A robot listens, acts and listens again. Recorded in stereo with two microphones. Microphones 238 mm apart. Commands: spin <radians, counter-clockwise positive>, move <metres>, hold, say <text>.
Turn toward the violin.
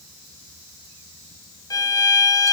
spin 0.52
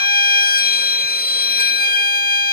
spin 2.36
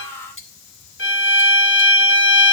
spin 1.13
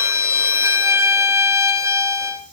spin -0.17
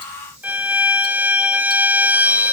say Facing the violin, under 1 m away.